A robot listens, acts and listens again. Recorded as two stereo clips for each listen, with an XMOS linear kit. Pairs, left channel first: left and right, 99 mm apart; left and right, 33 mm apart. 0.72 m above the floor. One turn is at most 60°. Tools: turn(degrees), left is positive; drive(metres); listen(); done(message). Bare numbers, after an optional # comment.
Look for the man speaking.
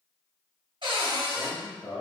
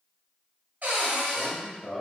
# The man speaking: about 35° left or 145° left.
turn(35)
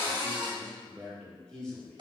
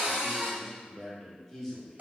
done("Found it: a man speaking, straight ahead.")